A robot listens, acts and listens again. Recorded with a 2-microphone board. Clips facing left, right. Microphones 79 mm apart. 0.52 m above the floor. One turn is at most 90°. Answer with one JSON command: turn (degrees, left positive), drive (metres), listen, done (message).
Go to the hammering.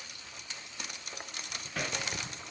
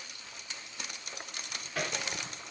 {"turn": 30}
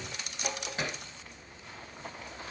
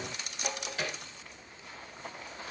{"turn": 90}
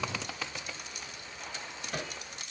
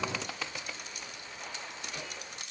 {"turn": 60}
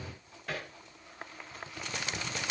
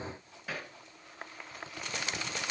{"drive": 1.0}
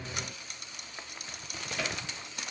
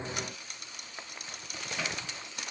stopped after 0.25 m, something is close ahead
{"done": "Blocked. The hammering is further on, straight ahead."}